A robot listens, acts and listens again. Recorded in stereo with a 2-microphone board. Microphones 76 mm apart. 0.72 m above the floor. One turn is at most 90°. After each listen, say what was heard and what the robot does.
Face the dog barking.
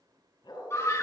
Turn 90° left.
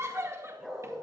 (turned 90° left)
Facing the dog barking.